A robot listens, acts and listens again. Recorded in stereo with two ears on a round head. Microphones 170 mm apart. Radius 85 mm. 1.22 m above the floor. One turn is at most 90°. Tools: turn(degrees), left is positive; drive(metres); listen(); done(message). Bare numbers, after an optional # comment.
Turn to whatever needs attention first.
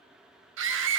# The scream: about 70° right or 110° right.
turn(-70)
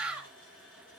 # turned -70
done("Found it: a scream, straight ahead.")